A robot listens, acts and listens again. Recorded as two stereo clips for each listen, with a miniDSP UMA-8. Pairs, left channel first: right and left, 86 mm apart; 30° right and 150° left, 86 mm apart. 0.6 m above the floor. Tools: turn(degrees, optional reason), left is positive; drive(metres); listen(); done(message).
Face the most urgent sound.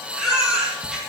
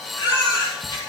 turn(degrees=10, reason="The baby crying: 10° left.")
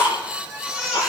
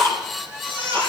done("Found it: a baby crying, straight ahead, over 4 m away.")